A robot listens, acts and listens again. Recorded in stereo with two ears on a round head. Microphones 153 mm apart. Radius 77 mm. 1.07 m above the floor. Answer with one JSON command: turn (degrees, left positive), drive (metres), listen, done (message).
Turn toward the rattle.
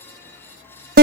{"listen": true}
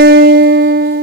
{"listen": true}
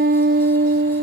{"done": "I can't make out a rattle, only a guitar."}